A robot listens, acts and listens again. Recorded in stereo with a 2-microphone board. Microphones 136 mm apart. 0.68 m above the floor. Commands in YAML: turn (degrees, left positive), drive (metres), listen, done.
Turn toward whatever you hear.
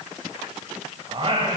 turn: -40
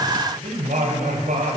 turn: -105
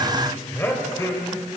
turn: 25
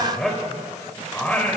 turn: 10
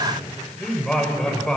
done: "Found it: singing, straight ahead, 2 to 4 m away."